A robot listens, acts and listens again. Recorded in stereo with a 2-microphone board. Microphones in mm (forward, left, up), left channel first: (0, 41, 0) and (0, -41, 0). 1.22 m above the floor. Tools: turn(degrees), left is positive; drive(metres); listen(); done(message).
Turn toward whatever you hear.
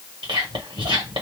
turn(degrees=-90)
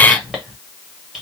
done("Facing the whispering, 1 to 2 m away.")